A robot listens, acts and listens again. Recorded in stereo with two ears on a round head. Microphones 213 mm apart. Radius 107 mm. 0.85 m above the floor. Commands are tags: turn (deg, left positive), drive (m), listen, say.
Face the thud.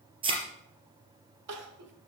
<turn deg="-25"/>
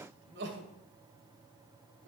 <listen/>
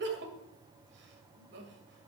<say>I heard a thud, but can't make it out now. It was about straight ahead or 130° right.</say>